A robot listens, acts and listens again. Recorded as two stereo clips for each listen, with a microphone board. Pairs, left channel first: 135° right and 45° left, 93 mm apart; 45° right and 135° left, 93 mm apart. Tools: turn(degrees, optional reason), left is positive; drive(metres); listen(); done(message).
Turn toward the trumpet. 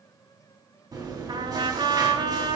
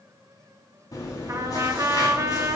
turn(degrees=80, reason="The trumpet: 80° left.")
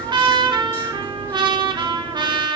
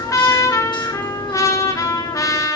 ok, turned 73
turn(degrees=10, reason="The trumpet is now 10° left.")
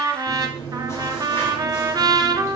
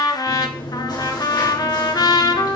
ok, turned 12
done("Found it: a trumpet, straight ahead, under 1 m away.")